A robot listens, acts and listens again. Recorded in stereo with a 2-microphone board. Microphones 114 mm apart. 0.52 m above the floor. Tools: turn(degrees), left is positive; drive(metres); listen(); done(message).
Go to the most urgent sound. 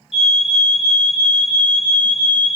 turn(degrees=55)
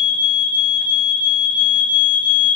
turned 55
turn(degrees=55)
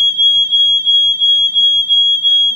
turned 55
turn(degrees=-10)
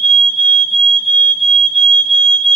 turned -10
drive(metres=1.0)
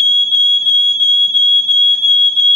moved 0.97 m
drive(metres=1.0)
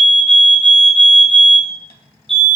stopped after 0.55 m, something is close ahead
turn(degrees=10)
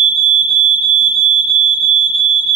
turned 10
turn(degrees=10)
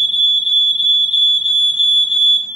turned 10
done("I am next to the fire alarm.")